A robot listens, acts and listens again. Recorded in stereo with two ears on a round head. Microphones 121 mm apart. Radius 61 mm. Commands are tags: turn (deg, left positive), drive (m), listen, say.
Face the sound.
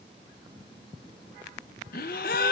<turn deg="75"/>
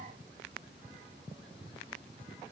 <listen/>
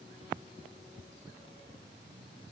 <say>I heard a gasp, but can't make it out now. It was about straight ahead or 30° left.</say>